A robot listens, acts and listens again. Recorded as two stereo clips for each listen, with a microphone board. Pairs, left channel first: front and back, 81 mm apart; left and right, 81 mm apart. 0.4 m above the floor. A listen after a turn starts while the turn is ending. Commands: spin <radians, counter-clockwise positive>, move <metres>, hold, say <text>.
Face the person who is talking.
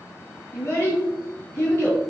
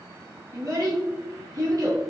spin -0.87
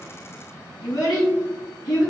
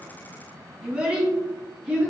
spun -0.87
spin -0.26
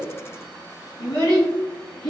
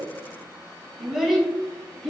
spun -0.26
say Found it: a child speaking, straight ahead.